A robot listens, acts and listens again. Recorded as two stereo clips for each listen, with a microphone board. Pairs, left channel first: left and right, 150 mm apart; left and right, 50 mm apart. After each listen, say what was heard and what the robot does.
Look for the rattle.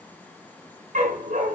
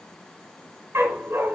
Keep listening.
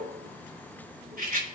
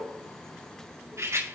Turn 90° right.
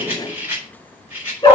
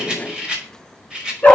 So it is at 15° right. Turn 15° right.
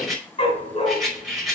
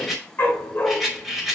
Found it: a rattle, straight ahead, over 4 m away.